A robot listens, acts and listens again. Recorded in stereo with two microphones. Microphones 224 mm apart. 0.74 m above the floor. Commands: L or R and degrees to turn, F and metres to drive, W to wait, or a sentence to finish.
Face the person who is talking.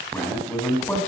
L30
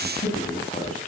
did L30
L145
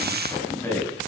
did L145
L10
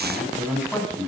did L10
Found it: a man speaking, straight ahead.